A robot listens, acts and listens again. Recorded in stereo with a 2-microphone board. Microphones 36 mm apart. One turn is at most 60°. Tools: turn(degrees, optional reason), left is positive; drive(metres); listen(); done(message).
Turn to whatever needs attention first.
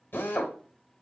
listen()
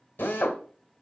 listen()
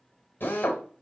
done("I can't make out anything urgent to turn to.")